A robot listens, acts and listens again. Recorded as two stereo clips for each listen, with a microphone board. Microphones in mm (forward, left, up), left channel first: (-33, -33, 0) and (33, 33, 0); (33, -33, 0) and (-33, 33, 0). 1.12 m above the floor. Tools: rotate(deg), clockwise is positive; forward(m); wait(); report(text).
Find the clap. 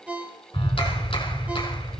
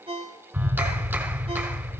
rotate(155)
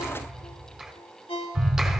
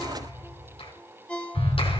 rotate(45)
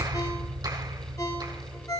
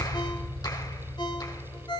report("Facing the clap.")